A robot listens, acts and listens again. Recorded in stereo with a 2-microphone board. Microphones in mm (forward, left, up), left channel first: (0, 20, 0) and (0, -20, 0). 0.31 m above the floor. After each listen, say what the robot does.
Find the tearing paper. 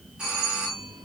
Keep listening.
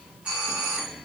Keep listening.
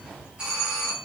I can't make out tearing paper to turn to.